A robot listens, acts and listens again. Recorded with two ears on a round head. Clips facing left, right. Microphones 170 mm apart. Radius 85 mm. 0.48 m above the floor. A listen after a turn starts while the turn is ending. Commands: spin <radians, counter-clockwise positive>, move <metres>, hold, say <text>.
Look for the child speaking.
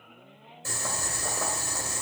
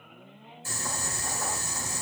hold
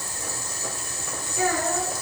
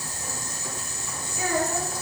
spin 1.05
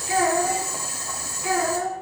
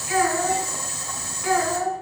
spin 0.44
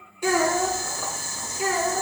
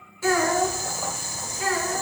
spin 0.26
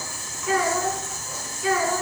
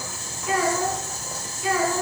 say Facing the child speaking, 2 to 4 m away.